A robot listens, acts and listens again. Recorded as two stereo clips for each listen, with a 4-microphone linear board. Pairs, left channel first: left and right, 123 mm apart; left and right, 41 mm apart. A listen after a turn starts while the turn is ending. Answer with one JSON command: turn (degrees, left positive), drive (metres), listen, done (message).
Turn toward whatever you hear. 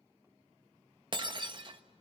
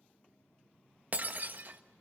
{"turn": -40}
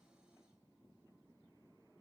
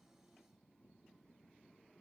{"listen": true}
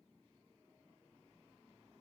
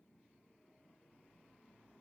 {"done": "I heard breaking glass, but can't make it out now. It was about straight ahead or 100° right."}